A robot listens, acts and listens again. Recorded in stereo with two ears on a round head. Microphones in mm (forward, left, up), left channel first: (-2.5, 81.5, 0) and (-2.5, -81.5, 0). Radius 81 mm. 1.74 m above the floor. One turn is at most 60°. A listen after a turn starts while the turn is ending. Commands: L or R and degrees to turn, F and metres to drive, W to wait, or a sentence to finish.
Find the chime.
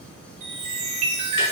R40
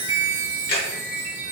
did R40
Found it: a chime, straight ahead.